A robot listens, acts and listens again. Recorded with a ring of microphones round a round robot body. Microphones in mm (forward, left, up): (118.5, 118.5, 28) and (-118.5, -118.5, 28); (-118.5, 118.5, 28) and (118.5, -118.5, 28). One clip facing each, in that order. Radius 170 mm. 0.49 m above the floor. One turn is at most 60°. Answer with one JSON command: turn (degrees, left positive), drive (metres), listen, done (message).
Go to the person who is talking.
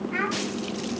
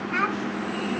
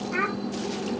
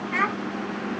{"turn": -60}
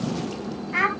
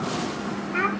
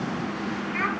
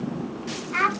{"turn": -20}
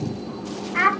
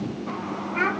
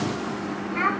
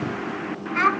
{"drive": 1.0}
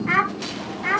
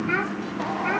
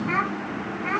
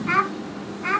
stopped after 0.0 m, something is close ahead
{"turn": -10}
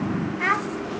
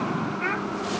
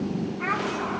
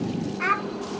{"done": "Something is in my way. I am facing the child speaking but have not reached it."}